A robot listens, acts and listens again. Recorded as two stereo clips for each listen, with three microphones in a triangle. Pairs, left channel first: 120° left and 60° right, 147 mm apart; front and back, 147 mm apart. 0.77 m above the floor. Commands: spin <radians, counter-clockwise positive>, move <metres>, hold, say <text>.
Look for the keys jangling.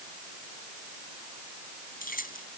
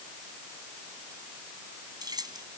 spin 2.09
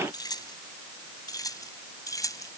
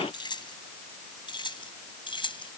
spin 0.96
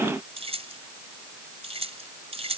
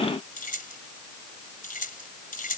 spin -0.26
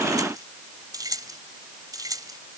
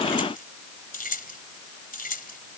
say Found it: keys jangling, straight ahead.